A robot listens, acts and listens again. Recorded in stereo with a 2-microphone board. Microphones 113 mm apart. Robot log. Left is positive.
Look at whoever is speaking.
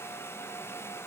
cmd idle
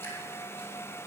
cmd idle
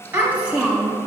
cmd yaw -30
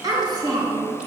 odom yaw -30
note: So it is at 145° right.
cmd yaw -145
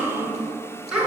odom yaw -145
note: The child speaking is now 10° right.
cmd yaw -10
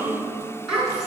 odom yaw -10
end: Facing the child speaking, over 4 m away.